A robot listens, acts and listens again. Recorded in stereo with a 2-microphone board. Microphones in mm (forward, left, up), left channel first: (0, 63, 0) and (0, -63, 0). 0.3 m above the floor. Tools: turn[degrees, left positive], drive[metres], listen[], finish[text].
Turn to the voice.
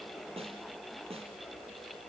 Action: listen[]
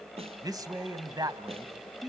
Thought: The man speaking: about 30° right or 150° right.
Action: turn[-30]
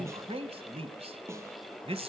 Thought: So it is at 115° right.
Action: turn[-115]
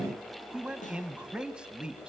Thought: The man speaking is now 10° right.
Action: turn[-10]
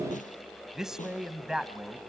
Action: finish[Found it: a man speaking, straight ahead, 1 to 2 m away.]